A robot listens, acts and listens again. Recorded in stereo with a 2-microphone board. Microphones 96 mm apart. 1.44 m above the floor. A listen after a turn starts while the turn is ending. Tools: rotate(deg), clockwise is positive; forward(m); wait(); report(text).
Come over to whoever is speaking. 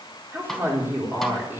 rotate(20)
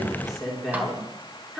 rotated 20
forward(1.0)
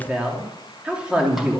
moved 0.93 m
rotate(10)
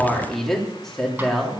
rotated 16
forward(1.0)
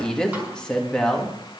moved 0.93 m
rotate(-10)
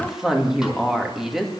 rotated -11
forward(1.0)
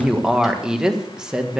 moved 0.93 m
forward(1.0)
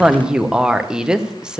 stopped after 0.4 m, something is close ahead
report("Arrived at the woman speaking, straight ahead.")